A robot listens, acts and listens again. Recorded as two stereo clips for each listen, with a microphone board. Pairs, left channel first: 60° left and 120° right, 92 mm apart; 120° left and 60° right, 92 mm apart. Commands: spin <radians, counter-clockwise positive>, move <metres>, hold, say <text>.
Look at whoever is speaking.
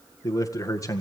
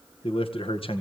spin 1.92
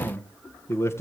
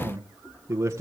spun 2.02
say Found it: a man speaking, straight ahead, 1 to 2 m away.